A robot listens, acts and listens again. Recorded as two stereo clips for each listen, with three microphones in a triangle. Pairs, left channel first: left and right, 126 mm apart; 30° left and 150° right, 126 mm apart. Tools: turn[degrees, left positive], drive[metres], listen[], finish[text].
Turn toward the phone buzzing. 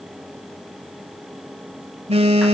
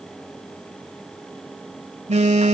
Thought: The phone buzzing: 125° right.
Action: turn[-125]
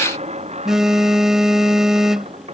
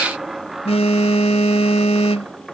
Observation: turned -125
Action: finish[Facing the phone buzzing.]